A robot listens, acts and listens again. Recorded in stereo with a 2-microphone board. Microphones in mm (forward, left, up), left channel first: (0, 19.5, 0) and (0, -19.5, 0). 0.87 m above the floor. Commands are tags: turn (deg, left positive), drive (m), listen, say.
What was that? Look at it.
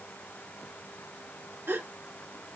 <turn deg="-55"/>
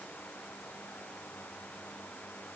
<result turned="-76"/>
<listen/>
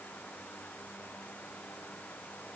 <say>I heard a gasp, but can't make it out now. It was about 20° left or 45° right.</say>